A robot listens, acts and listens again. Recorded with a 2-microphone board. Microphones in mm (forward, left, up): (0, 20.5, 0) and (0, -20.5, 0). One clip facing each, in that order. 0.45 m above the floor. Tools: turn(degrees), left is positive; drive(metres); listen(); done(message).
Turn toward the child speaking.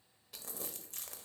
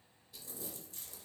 listen()
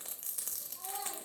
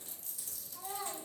turn(degrees=-50)
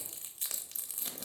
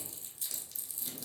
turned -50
listen()
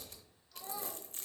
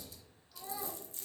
turn(degrees=-10)
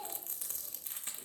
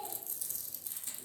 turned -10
done("Found it: a child speaking, straight ahead.")